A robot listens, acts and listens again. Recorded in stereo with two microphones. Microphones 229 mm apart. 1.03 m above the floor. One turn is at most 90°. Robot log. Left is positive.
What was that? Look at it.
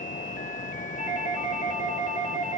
note: The doorbell: about 35° left or 145° left.
cmd yaw +35
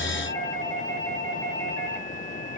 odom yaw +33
note: So it is at 110° left.
cmd yaw +90
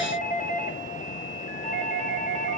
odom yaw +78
note: The doorbell is now 30° left.
cmd yaw +30
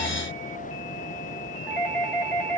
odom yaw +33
end: Found it: a doorbell, straight ahead.